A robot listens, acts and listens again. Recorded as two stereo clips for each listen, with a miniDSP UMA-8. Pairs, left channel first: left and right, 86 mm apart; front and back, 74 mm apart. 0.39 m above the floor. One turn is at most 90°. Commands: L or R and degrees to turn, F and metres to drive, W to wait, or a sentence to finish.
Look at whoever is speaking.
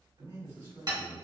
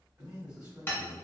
R90
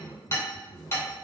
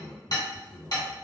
R25
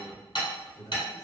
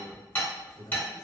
L10
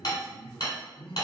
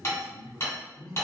Found it: a man speaking, straight ahead, 1 to 2 m away.